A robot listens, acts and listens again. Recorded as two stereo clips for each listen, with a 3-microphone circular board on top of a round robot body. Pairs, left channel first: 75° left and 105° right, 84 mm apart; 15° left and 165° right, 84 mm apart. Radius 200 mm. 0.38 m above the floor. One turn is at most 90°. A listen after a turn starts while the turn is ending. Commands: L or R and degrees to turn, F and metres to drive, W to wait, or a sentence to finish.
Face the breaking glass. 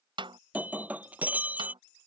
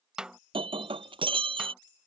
L90
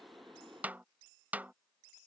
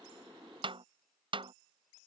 L90
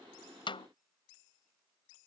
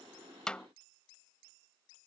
Facing where the breaking glass came from. I can't hear it now.